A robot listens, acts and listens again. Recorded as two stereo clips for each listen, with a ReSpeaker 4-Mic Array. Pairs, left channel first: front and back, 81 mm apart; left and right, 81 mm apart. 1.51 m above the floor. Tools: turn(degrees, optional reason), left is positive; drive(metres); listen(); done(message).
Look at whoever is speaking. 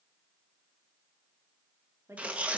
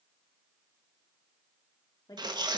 turn(degrees=125, reason="The woman speaking: 125° left.")
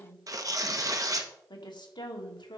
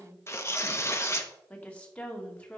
turn(degrees=15, reason="The woman speaking is now 15° left.")
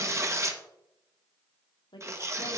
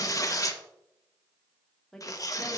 done("Facing the woman speaking.")